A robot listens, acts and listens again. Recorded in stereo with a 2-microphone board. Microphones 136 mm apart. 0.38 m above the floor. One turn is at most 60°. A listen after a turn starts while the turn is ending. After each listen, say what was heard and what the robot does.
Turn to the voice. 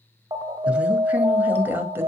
The woman speaking: about 15° right or 165° right. Turn 15° right.
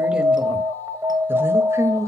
The woman speaking: about 25° right or 155° right. Turn 25° right.
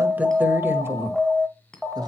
The woman speaking: about 30° right or 150° right. Turn 30° right.
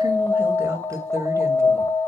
The woman speaking: about 20° right or 160° right. Turn 20° right.
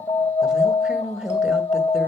Turn 30° right.
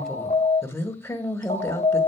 So it is at 20° left. Turn 20° left.
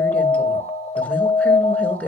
The woman speaking is now 10° left. Turn 10° left.
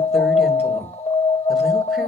Facing the woman speaking.